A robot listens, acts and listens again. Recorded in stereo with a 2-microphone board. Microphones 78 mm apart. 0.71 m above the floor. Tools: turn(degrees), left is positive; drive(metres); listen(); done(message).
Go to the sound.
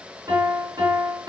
turn(degrees=-70)
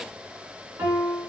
turn(degrees=-35)
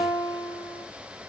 drive(metres=1.0)
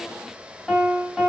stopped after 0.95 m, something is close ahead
done("Arrived at the piano, straight ahead.")